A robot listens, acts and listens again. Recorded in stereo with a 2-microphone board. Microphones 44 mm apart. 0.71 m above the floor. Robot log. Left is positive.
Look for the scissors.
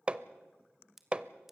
cmd yaw -30
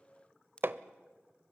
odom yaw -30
note: So it is at 25° left.
cmd yaw +25
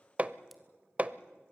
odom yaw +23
cmd idle
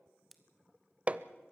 end: Facing the scissors.